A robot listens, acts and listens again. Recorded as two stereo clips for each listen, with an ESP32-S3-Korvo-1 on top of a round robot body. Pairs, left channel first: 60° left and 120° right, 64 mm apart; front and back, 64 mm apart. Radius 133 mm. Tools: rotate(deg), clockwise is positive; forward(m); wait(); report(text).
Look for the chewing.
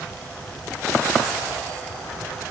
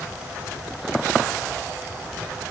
wait()
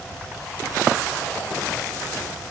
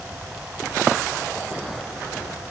wait()
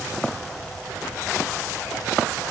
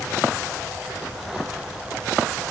report("I can't make out chewing.")